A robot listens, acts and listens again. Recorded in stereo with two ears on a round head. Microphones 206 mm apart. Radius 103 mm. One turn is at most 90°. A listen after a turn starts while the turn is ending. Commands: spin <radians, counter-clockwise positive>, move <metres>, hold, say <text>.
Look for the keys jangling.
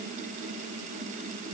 hold
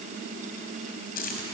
spin 0.70
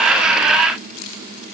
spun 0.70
spin 1.57
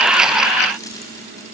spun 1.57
spin 0.26
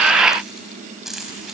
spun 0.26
say Facing the keys jangling.